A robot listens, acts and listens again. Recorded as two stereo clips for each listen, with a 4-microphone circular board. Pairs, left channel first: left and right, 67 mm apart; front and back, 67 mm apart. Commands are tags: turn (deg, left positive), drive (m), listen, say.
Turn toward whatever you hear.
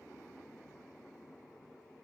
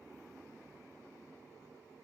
<listen/>
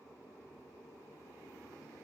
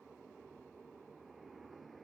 <listen/>
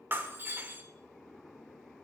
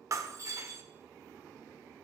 <turn deg="-145"/>
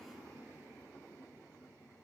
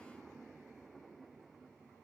<say>Facing where the breaking glass came from. I can't hear it now.</say>